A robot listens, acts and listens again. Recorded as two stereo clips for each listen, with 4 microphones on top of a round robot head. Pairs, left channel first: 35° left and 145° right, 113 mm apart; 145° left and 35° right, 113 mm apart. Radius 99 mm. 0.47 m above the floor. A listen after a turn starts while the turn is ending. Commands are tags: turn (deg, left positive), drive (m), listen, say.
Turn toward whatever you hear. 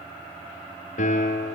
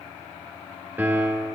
<turn deg="40"/>
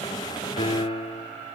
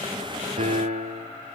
<turn deg="-10"/>
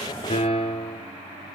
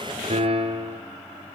<say>Found it: a piano, straight ahead, 2 to 4 m away.</say>